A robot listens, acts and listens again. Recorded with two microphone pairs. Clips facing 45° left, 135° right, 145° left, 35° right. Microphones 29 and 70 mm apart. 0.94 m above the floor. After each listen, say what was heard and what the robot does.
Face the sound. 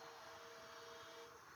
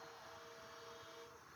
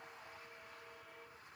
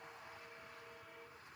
Keep listening.
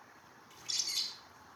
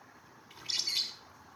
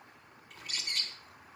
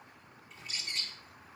The bird: 170° left. Turn 170° left.
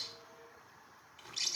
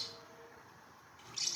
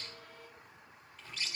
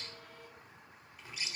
The bird is now 40° left. Turn 40° left.
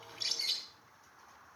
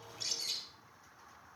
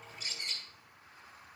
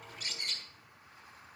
Found it: a bird, straight ahead.